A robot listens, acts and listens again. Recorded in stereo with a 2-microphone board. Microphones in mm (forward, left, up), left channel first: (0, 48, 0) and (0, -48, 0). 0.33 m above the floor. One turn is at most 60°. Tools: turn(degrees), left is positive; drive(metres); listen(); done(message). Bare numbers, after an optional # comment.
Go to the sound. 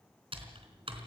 # The typing on a keyboard: about 70° right or 110° right.
turn(-60)
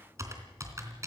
# So it is at 35° right.
turn(-35)
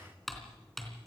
drive(1.0)
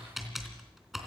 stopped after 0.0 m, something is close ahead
done("Blocked. The typing on a keyboard is further on, straight ahead.")